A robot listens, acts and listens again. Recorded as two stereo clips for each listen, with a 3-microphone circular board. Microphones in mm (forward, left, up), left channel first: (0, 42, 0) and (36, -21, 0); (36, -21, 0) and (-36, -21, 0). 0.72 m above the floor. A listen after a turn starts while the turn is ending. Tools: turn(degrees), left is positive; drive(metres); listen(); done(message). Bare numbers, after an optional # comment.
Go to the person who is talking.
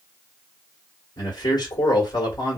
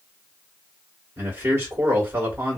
# The man speaking: 130° left.
turn(130)
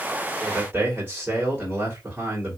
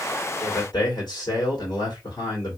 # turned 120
drive(1.0)
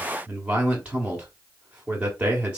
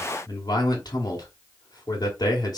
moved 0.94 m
# The man speaking is now 15° left.
turn(15)
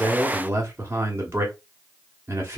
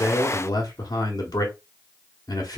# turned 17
drive(1.0)
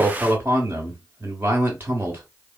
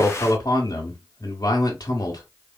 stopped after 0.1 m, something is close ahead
done("Arrived at the man speaking, straight ahead.")